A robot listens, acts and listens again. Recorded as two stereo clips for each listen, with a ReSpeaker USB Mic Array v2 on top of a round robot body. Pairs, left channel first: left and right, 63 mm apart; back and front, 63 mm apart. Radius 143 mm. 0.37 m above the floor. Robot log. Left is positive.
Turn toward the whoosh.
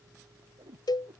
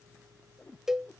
note: The whoosh: 110° right.
cmd yaw -110
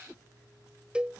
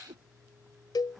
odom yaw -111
end: Found it: a whoosh, straight ahead.